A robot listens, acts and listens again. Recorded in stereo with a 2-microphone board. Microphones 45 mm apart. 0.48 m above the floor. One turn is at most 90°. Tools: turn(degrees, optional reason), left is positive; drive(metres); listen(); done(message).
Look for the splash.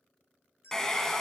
listen()
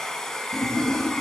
turn(degrees=65, reason="The splash: about 65° left or 115° left.")
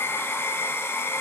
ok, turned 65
listen()
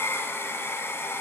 done("I heard a splash, but can't make it out now. It was about straight ahead or 50° left.")